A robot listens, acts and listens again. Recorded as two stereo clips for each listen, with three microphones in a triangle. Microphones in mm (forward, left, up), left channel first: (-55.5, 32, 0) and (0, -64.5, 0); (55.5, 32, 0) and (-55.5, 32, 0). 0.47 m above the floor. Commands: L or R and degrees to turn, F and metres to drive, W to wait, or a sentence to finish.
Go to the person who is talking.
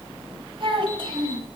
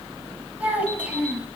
R100
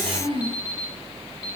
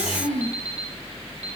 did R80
R20
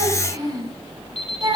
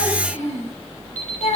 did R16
F1.0
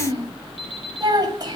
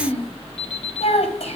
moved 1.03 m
R10
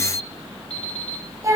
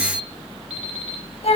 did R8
F1.0
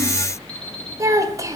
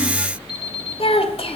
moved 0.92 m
F1.0
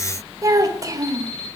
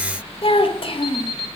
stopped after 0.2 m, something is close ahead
R10
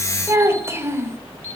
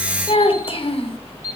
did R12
Arrived at the child speaking, straight ahead.